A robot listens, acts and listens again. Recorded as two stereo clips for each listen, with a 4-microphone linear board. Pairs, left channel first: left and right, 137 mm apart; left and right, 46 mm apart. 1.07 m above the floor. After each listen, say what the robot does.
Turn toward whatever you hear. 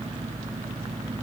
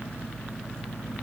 Keep listening.
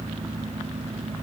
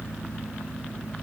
Keep listening.
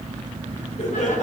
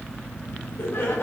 Turn 60° left.
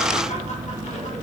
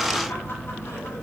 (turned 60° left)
Keep listening.
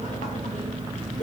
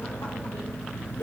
Keep listening.
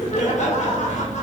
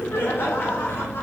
Turn 60° left.
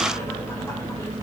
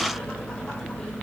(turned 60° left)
Keep listening.
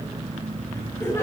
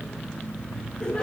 Turn 20° left.
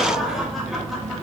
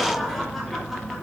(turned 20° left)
Found it: laughter, straight ahead.